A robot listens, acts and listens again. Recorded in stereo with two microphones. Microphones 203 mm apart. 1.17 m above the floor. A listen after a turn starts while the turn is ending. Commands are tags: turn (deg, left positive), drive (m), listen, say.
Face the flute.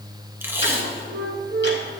<turn deg="-60"/>
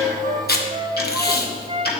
<turn deg="-30"/>
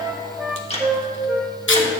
<turn deg="-10"/>
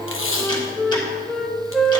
<say>Found it: a flute, straight ahead.</say>